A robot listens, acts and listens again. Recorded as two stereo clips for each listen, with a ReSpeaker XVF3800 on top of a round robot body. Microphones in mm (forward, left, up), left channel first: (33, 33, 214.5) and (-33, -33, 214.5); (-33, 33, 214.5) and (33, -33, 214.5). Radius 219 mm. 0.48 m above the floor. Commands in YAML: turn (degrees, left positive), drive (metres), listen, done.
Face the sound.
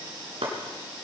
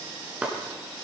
turn: -125
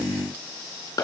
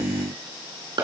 done: "Found it: chopping, straight ahead."